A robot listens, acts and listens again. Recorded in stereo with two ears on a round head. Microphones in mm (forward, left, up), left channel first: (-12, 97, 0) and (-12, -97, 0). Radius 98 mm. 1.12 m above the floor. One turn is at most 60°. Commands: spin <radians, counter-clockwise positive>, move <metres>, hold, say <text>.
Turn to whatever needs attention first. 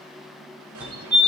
spin -0.52
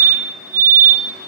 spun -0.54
spin -1.05
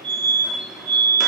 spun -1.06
spin -1.05
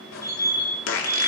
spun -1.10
spin -0.26
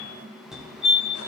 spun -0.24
say Facing the fire alarm.